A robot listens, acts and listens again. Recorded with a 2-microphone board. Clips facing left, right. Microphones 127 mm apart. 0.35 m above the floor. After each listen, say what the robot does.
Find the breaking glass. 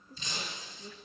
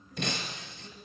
Turn 65° right.
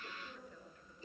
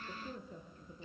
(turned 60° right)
Keep listening.
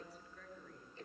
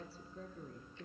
I heard breaking glass, but can't make it out now. It was about 5° right or 55° right.